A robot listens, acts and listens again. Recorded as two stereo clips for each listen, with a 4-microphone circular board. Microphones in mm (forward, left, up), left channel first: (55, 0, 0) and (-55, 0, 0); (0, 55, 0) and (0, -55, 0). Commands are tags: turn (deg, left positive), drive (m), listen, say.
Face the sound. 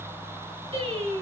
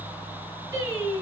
<turn deg="-155"/>
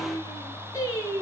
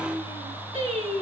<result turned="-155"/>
<turn deg="-60"/>
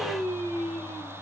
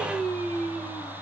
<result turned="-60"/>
<say>Facing the singing, over 4 m away.</say>